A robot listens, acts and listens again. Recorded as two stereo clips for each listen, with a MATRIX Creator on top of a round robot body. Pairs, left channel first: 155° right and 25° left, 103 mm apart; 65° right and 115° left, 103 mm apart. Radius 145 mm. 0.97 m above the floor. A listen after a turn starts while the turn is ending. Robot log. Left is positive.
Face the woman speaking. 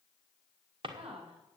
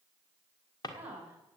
note: The woman speaking: 40° left.
cmd yaw +40
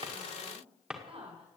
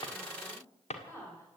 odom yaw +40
end: Found it: a woman speaking, straight ahead, over 4 m away.